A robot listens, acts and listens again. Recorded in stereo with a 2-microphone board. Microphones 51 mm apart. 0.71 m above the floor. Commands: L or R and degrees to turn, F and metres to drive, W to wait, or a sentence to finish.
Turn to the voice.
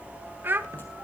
R40
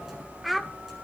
Facing the child speaking, 1 to 2 m away.